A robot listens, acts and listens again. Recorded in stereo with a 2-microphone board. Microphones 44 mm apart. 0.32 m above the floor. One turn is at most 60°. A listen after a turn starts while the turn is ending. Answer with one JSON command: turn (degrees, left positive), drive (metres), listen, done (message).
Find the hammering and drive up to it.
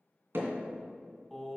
{"turn": -60}
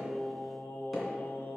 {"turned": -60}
{"listen": true}
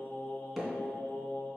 {"drive": 1.0}
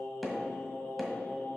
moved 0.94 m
{"drive": 1.0}
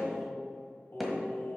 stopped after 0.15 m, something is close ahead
{"done": "Arrived at the hammering, straight ahead."}